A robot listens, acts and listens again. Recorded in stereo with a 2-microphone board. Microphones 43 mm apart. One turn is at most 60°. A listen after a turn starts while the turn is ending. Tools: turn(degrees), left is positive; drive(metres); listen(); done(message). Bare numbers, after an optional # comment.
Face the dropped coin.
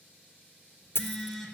turn(60)
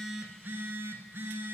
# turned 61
# Nothing new. It was at 30° left.
turn(30)
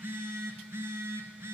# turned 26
done("I heard a dropped coin from this way, but can't make it out now.")